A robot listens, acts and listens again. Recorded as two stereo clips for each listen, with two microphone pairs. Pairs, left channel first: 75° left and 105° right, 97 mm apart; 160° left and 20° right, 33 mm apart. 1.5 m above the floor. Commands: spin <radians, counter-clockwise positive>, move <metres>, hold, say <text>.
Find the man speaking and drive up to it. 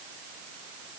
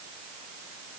hold
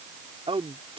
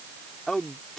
spin -2.18
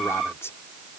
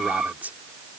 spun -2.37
spin 0.17
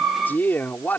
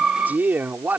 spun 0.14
move 1.0
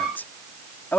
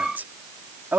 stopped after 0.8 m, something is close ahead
say Something is in my way. I am facing the man speaking but have not reached it.